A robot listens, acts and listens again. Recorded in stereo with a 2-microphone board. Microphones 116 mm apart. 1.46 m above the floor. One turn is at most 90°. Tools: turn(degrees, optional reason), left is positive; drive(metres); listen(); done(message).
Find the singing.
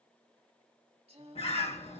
turn(degrees=-60, reason="The singing: about 60° right or 120° right.")
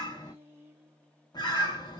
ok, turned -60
turn(degrees=-20, reason="So it is at 20° right.")
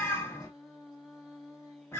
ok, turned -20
done("Found it: singing, straight ahead, 1 to 2 m away.")